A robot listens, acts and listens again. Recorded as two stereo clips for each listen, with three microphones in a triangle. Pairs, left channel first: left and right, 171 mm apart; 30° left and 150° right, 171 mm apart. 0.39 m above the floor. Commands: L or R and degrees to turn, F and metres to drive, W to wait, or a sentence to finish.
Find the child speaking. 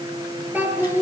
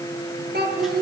R165
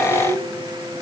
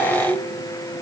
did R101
R60
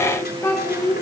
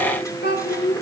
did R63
L20
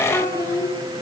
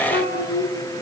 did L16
L15
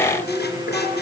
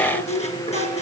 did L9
L15
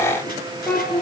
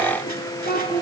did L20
Found it: a child speaking, straight ahead.